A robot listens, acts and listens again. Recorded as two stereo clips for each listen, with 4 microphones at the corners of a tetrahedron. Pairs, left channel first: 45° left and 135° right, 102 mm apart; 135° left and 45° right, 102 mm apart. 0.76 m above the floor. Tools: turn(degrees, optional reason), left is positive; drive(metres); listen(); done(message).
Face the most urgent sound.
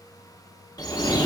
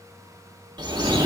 listen()
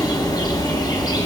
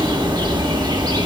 listen()
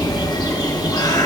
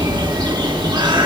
done("I can't make out anything urgent, only a bird.")